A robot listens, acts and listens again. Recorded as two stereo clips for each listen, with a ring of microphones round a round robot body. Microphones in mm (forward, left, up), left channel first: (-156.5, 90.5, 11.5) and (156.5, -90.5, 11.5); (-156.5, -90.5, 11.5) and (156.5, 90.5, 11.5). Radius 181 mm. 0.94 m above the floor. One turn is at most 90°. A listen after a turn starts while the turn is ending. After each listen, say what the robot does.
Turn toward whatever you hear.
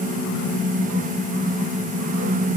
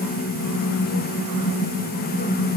Keep listening.
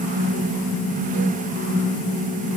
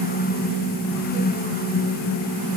Keep listening.
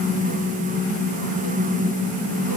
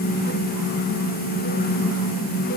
I can't make out anything.